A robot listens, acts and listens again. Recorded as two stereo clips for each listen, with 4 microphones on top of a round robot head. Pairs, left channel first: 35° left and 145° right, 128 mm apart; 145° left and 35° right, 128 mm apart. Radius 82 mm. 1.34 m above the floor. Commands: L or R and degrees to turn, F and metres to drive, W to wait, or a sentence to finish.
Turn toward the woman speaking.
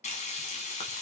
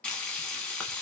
W
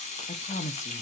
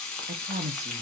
Found it: a woman speaking, straight ahead.